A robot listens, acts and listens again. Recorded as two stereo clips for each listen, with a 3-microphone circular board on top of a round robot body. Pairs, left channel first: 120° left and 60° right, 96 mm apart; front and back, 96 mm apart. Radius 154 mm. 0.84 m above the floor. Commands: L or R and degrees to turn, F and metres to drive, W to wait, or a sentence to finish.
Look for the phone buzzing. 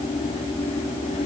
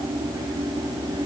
W
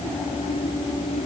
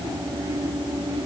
W
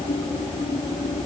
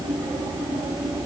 I can't make out a phone buzzing.